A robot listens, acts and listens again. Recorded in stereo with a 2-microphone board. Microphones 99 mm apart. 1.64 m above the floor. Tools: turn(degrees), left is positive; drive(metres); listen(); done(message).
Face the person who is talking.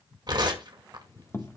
listen()
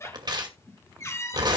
listen()
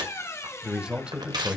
turn(degrees=-30)
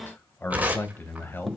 turn(degrees=20)
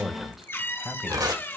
done("Found it: a man speaking, straight ahead, 1 to 2 m away.")